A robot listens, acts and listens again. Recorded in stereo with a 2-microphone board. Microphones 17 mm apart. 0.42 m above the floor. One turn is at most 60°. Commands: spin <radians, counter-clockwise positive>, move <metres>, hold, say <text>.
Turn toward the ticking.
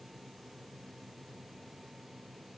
hold
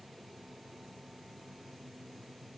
hold
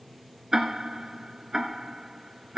spin -0.52
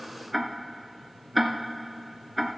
say Found it: ticking, straight ahead.